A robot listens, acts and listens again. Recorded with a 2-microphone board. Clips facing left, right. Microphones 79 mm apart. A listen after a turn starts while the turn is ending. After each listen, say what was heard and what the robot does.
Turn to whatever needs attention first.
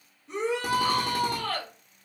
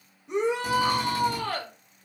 The shout: about 15° right or 165° right. Turn 15° right.
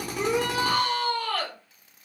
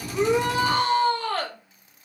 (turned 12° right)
So it is at 150° right. Turn 150° right.
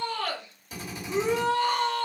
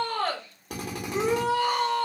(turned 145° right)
Found it: a shout, straight ahead.